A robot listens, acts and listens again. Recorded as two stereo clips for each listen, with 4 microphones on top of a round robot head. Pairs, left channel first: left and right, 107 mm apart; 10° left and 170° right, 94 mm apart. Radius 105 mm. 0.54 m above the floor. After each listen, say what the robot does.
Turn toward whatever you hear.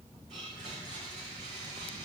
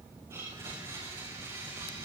Turn 115° right.
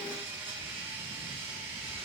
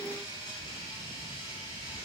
Turn 20° right.
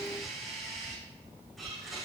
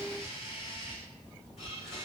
Found it: a blender, straight ahead.